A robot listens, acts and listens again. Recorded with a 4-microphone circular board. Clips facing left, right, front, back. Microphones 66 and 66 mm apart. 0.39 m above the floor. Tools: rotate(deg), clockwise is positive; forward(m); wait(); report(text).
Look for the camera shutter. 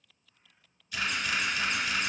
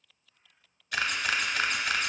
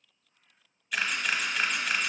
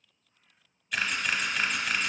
rotate(90)
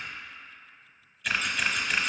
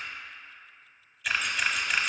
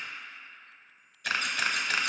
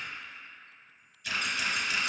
report("Found it: a camera shutter, straight ahead, under 1 m away.")